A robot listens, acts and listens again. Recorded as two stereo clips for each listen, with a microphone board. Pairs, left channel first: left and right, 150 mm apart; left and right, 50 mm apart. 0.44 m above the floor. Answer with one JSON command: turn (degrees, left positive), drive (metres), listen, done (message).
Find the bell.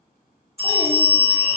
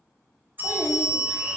{"turn": -40}
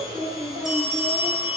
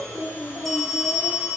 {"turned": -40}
{"done": "Facing the bell, under 1 m away."}